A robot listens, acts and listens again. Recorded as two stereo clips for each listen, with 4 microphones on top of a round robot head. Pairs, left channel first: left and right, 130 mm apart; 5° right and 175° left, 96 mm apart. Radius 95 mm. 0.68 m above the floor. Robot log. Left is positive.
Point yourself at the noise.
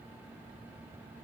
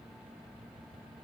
cmd idle
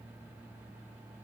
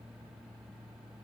cmd idle
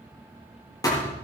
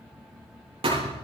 note: The thud: 150° left.
cmd yaw +150
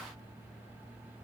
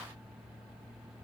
end: I heard a thud from this way, but can't make it out now.